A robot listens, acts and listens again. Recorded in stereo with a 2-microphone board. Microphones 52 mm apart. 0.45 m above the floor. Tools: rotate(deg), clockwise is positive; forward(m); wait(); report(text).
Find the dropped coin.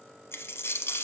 rotate(-55)
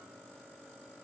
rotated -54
wait()
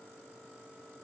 report("I heard a dropped coin, but can't make it out now. It was about straight ahead or 70° left.")